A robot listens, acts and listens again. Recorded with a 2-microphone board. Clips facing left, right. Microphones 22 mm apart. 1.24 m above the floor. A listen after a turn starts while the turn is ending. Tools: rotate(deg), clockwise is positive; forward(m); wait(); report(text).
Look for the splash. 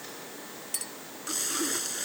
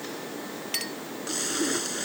rotate(30)
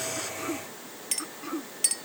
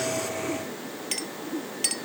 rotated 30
wait()
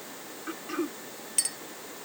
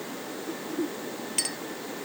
report("I heard a splash, but can't make it out now. It was about 20° left or 140° right.")